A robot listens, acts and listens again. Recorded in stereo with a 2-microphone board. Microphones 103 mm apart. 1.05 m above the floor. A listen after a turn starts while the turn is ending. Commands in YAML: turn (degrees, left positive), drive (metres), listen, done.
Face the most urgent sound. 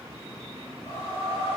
listen: true
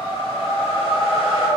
listen: true
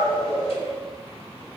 done: "I can't make out anything urgent, only a whoosh."